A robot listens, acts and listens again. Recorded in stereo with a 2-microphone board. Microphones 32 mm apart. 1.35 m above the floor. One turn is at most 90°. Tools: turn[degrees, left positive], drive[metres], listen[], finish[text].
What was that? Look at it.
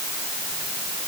Action: listen[]
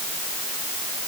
Action: listen[]
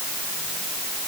Action: finish[I can't make out anything to turn to.]